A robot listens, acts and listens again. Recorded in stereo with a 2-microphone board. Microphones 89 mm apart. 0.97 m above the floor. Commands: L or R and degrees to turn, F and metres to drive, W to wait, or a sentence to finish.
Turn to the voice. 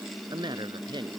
R55
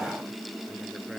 W
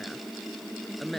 Found it: a woman speaking, straight ahead.